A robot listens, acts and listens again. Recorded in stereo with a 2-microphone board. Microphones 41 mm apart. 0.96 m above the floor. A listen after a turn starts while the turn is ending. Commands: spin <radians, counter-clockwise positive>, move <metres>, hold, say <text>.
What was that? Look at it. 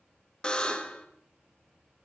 spin 0.44
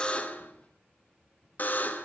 spin 2.27
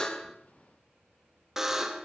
spin -0.26
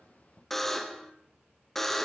say Facing the buzzer.